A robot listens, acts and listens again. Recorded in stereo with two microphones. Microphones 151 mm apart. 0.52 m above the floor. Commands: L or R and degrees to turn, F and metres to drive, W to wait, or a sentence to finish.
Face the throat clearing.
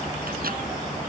W
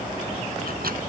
W
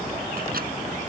I can't make out throat clearing to turn to.